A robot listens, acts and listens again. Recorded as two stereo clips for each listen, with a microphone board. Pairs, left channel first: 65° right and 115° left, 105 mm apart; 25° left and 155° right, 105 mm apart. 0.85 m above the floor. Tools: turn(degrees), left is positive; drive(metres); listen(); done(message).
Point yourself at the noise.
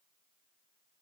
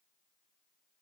listen()
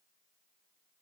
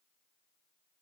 listen()
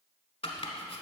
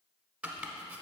turn(degrees=-80)
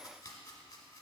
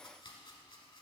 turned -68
turn(degrees=-10)
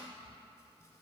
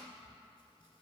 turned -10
listen()
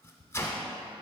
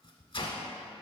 done("Facing the chopping.")